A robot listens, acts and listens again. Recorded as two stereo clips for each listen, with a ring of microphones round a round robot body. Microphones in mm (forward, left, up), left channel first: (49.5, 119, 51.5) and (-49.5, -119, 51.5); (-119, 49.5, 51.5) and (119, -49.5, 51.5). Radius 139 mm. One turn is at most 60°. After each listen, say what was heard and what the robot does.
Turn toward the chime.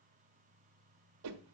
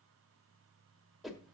Keep listening.
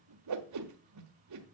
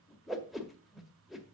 Keep listening.
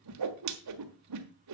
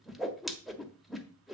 I can't make out a chime, only a whoosh.